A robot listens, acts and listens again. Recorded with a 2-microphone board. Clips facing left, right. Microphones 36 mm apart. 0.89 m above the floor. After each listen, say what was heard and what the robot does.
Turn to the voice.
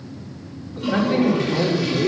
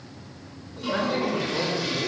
The man speaking: about 75° left or 105° left. Turn 75° left.
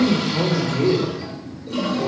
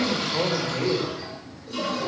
So it is at 20° left. Turn 20° left.
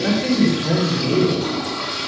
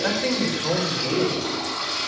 Found it: a man speaking, straight ahead, 2 to 4 m away.